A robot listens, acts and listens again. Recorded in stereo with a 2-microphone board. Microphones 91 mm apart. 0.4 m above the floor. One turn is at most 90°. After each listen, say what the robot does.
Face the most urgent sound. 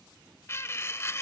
Keep listening.
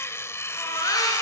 Turn 45° left.
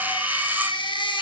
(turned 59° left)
Turn 75° left.
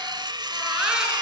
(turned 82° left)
Turn 10° right.
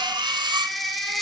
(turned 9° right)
Facing the baby crying, over 4 m away.